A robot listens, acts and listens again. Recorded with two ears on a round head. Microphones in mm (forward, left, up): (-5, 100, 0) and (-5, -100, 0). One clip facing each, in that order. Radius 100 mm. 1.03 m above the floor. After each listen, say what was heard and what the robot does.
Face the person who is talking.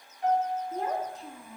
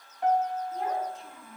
The child speaking: about 25° left or 155° left. Turn 25° left.
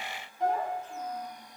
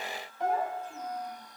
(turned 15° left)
Keep listening.
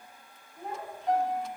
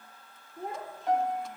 So it is at 35° right. Turn 35° right.
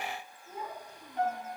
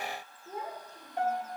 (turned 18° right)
The child speaking is now 35° right. Turn 35° right.
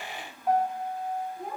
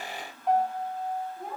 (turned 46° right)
Facing the child speaking, 2 to 4 m away.